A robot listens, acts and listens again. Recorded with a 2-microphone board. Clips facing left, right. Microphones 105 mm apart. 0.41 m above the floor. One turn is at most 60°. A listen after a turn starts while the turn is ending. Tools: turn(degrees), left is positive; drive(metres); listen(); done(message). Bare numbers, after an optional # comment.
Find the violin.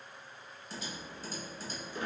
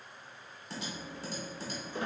listen()
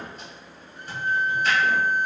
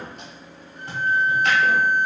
turn(-30)
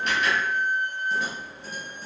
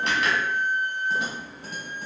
# So it is at 20° left.
turn(20)
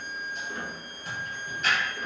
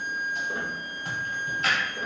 done("Found it: a violin, straight ahead, 1 to 2 m away.")